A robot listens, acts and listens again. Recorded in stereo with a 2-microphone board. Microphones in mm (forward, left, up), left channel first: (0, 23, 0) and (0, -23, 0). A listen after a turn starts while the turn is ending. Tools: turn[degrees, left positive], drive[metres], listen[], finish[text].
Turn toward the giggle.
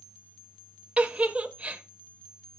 Thought: The giggle: about 25° right or 155° right.
Action: turn[-25]
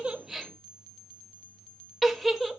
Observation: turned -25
Action: finish[Facing the giggle, under 1 m away.]